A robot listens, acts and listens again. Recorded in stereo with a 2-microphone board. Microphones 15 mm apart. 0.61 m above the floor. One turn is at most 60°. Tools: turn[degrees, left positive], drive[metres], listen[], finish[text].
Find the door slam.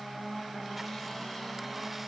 Action: listen[]
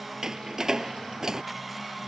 Thought: The door slam: about 40° right or 140° right.
Action: turn[-40]
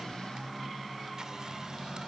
Action: listen[]
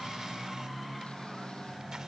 Action: finish[I heard a door slam, but can't make it out now. It was about straight ahead or 100° right.]